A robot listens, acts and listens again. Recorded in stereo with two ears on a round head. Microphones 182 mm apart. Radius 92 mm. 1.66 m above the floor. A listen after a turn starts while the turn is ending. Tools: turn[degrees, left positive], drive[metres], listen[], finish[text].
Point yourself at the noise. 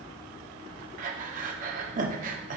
Thought: The breathing: about 40° right or 140° right.
Action: turn[-40]
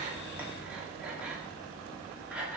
Action: finish[Facing the breathing.]